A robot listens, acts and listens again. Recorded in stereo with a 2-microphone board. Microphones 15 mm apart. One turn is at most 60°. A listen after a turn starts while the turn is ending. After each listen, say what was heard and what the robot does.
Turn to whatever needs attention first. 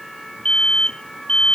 The alarm: about 65° left or 115° left. Turn 60° left.
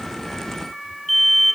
Facing the alarm.